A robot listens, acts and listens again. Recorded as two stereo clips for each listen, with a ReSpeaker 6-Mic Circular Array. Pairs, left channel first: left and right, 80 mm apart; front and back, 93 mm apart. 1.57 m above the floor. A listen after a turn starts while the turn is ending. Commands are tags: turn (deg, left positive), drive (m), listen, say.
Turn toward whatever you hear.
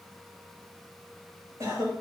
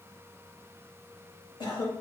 <turn deg="-35"/>
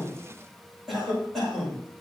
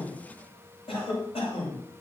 <say>Facing the cough, over 4 m away.</say>